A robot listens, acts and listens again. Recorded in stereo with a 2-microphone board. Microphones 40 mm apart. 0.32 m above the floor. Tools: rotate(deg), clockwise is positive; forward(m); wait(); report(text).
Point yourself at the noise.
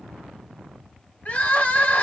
rotate(-30)
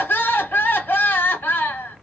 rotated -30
rotate(-115)
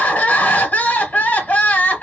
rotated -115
rotate(-50)
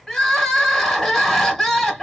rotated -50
rotate(-15)
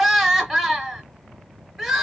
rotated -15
report("Found it: crying, straight ahead.")